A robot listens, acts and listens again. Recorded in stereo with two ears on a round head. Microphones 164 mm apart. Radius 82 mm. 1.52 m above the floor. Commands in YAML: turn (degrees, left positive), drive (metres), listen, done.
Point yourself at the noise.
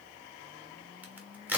turn: -30
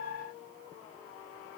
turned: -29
listen: true
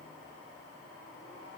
done: "I heard a crack, but can't make it out now. It was about 20° left or 145° right."